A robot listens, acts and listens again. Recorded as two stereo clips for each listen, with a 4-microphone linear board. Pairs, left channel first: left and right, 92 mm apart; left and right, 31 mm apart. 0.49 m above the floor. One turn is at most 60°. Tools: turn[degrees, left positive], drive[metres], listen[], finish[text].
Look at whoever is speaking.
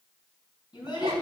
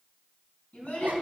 Thought: The child speaking: about 55° left or 125° left.
Action: turn[55]
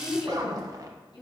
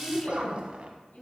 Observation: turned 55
Thought: So it is at 70° left.
Action: turn[60]
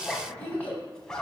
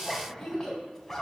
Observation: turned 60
Thought: The child speaking is now 20° left.
Action: turn[20]
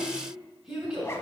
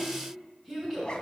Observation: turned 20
Action: finish[Facing the child speaking.]